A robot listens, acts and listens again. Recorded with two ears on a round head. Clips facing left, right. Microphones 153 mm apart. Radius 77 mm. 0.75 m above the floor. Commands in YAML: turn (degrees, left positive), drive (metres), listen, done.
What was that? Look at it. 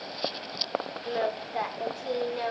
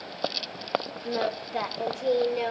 turn: -30
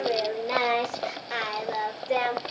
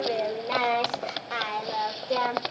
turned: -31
turn: 20
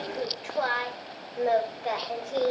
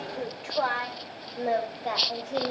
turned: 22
turn: 15
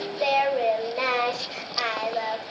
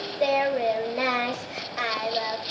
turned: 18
done: "Facing the singing."